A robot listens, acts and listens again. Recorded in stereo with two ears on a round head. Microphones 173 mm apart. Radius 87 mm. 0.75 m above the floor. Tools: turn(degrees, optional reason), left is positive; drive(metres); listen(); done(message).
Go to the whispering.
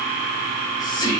turn(degrees=20, reason="The whispering: about 20° left or 160° left.")
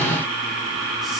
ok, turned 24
listen()
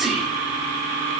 drive(metres=1.0)
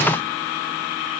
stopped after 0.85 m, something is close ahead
listen()
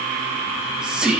done("I am next to the whispering.")